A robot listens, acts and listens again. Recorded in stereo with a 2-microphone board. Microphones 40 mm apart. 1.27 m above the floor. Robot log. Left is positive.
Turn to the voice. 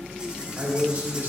note: The man speaking: about 55° right or 125° right.
cmd yaw -55
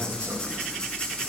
cmd idle
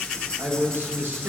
note: So it is at 75° right.
cmd yaw -75
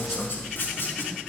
cmd idle
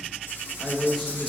end: Found it: a man speaking, straight ahead, 1 to 2 m away.